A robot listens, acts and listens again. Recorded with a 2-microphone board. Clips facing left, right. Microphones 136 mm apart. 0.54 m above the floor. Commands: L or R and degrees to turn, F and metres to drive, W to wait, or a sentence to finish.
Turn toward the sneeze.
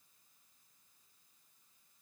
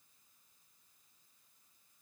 W
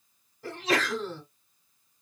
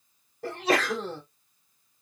R60
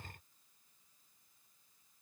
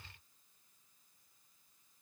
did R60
W
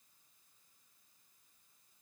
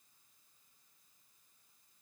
I heard a sneeze, but can't make it out now. It was about straight ahead or 60° right.